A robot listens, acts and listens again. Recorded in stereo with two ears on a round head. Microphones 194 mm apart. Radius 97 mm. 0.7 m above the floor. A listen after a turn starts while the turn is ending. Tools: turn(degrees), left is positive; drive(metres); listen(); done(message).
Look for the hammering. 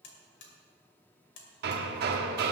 turn(degrees=-50)
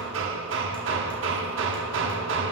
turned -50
turn(degrees=-75)
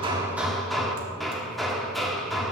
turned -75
done("Found it: hammering, straight ahead.")